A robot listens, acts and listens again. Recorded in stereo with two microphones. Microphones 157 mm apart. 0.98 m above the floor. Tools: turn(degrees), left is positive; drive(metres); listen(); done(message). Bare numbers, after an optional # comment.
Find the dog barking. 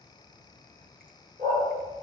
# The dog barking: about 55° right or 125° right.
turn(-55)
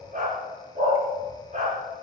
# So it is at 55° right.
turn(-55)
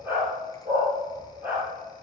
# The dog barking is now 10° right.
turn(-10)
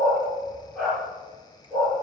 done("Facing the dog barking.")